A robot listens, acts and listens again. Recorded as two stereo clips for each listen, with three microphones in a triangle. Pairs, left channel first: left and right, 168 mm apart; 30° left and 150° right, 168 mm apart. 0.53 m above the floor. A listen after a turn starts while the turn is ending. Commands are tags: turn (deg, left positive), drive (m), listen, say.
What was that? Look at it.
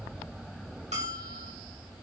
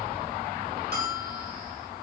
<turn deg="-135"/>
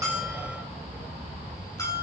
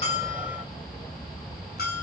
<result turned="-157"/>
<turn deg="20"/>
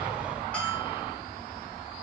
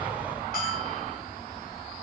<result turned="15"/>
<say>Found it: a bell, straight ahead, 2 to 4 m away.</say>